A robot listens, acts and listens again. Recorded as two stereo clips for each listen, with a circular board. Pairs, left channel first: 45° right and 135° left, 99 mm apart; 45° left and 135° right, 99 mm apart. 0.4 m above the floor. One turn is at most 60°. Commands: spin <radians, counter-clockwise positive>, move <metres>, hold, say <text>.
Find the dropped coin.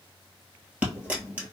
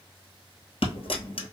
spin 1.05
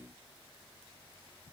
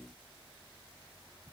say Facing where the dropped coin came from. I can't hear it now.